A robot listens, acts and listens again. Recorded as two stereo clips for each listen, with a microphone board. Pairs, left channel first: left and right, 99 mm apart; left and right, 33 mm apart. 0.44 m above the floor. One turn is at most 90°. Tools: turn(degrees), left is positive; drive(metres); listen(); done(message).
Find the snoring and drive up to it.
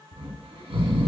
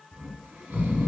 turn(degrees=-90)
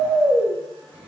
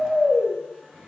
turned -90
drive(metres=1.0)
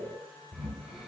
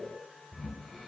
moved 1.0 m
drive(metres=1.0)
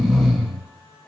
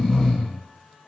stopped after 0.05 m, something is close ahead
done("Arrived at the snoring, straight ahead.")